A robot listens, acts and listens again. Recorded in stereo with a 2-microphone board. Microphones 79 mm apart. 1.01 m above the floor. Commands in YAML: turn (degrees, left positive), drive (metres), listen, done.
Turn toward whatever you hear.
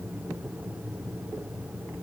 listen: true
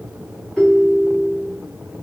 turn: 30
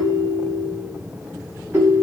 turn: -25
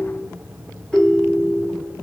done: "Found it: a ringtone, straight ahead, 2 to 4 m away."